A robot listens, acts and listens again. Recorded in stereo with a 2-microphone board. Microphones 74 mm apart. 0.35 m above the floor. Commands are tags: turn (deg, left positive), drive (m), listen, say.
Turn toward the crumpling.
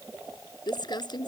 <turn deg="90"/>
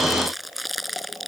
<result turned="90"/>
<say>Facing the crumpling.</say>